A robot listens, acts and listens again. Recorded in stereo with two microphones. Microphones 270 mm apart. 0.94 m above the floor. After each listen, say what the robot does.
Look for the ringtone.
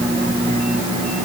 Keep listening.
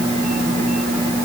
Keep listening.
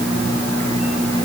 I can't make out a ringtone.